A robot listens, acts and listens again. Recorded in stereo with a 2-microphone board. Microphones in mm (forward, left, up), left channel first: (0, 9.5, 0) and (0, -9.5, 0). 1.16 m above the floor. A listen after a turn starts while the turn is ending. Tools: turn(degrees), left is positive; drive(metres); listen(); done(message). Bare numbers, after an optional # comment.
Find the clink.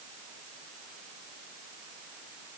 listen()
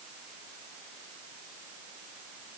listen()
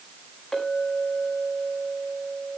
turn(30)
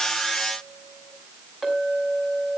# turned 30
# So it is at 30° right.
turn(-30)
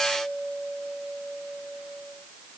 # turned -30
# The clink is now 10° right.
turn(-10)
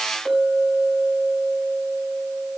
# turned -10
done("Found it: a clink, straight ahead, over 4 m away.")